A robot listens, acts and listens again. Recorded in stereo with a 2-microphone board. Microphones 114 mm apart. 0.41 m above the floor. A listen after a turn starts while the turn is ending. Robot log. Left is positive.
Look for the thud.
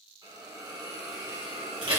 cmd idle
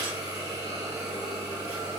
cmd idle
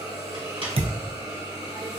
note: The thud: about 65° right or 115° right.
cmd yaw -65
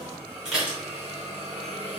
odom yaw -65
cmd idle
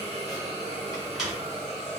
end: I heard a thud, but can't make it out now. It was about straight ahead or 50° right.